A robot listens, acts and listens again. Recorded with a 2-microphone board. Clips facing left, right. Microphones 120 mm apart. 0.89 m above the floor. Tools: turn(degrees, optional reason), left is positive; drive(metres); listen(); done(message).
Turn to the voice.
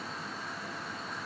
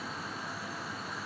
listen()
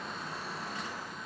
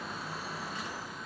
listen()
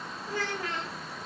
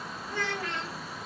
turn(degrees=35, reason="The child speaking: about 35° left or 145° left.")
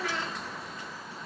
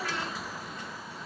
listen()
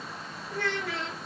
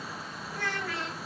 turn(degrees=110, reason="So it is at 110° left.")
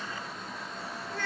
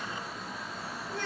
turn(degrees=-20, reason="The child speaking is now 20° right.")
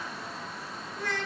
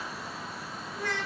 done("Facing the child speaking, 1 to 2 m away.")